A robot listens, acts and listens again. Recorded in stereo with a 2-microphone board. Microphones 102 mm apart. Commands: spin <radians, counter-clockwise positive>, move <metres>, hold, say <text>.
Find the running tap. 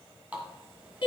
spin -0.52
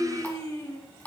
spin 0.35
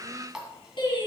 say Found it: a running tap, straight ahead.